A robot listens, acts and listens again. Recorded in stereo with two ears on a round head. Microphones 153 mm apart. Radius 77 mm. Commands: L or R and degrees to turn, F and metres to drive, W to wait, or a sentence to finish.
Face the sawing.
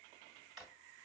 W
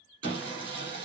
R30
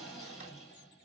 Found it: sawing, straight ahead.